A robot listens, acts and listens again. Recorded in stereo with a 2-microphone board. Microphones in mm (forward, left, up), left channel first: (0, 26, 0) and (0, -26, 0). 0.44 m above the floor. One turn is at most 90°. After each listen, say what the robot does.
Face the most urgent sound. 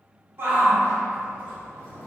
Turn 45° right.
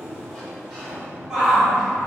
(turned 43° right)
Turn 10° right.
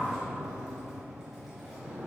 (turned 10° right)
Keep listening.
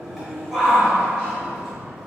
Found it: a shout, straight ahead.